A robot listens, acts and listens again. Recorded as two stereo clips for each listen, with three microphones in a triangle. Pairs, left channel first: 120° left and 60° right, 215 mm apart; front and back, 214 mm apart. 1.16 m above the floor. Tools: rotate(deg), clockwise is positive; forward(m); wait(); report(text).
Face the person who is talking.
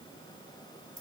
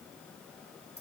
wait()
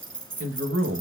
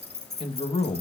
rotate(60)
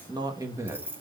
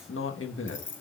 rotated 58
rotate(-15)
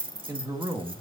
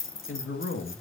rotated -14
rotate(-15)
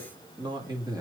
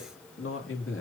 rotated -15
rotate(-15)
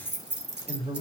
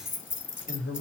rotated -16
report("Facing the man speaking.")